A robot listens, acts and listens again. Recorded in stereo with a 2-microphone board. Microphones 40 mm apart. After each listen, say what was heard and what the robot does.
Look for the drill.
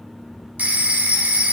Keep listening.
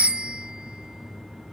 Keep listening.
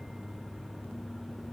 I can't make out a drill, only a phone ringing.